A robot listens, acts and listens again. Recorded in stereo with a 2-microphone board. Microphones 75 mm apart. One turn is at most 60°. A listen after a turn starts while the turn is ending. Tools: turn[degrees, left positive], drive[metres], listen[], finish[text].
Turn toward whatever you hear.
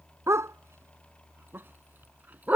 Thought: The dog barking: about 20° right or 160° right.
Action: turn[-20]
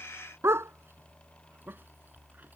Thought: The dog barking: about 35° right or 145° right.
Action: turn[-35]
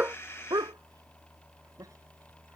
Thought: So it is at 125° right.
Action: turn[-60]
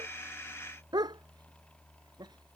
Thought: The dog barking is now 70° right.
Action: turn[-60]
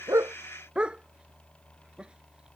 Thought: The dog barking is now 15° right.
Action: turn[-15]
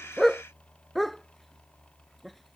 Action: finish[Facing the dog barking.]